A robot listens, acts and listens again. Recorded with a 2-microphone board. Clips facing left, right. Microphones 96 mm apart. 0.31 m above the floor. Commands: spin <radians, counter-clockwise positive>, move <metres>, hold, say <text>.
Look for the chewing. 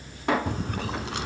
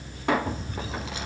spin 1.22
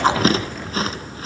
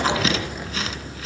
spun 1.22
spin 0.70
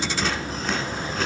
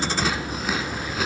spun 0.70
say Found it: chewing, straight ahead, 1 to 2 m away.